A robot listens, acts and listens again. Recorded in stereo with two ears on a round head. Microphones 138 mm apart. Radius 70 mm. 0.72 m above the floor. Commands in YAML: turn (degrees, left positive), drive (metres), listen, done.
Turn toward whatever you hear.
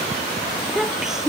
turn: -30
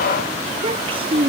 turn: -140
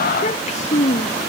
turn: 45
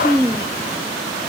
done: "Facing the child speaking."